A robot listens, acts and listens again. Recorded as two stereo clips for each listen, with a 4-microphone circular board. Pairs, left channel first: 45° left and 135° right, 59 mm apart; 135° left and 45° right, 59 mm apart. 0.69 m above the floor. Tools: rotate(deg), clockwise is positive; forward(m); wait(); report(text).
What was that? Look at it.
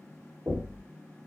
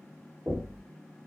rotate(95)
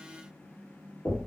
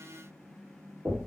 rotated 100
report("Facing the knocking.")